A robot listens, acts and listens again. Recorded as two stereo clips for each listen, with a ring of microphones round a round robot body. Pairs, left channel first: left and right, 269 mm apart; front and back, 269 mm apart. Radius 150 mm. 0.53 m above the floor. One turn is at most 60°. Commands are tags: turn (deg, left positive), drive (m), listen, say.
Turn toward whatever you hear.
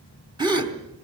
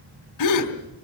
<turn deg="-15"/>
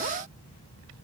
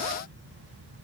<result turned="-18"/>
<say>I heard a gasp from this way, but can't make it out now.</say>